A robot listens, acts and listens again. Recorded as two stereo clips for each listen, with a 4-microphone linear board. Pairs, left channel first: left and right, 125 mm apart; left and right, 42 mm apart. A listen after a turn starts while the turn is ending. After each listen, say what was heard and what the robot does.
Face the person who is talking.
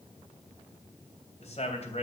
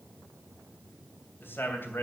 The man speaking: about 55° left or 125° left. Turn 55° left.
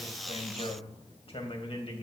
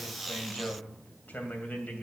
So it is at 55° left. Turn 55° left.
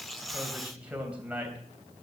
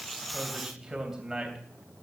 The man speaking is now 10° right. Turn 10° right.
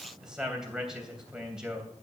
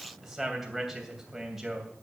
Facing the man speaking.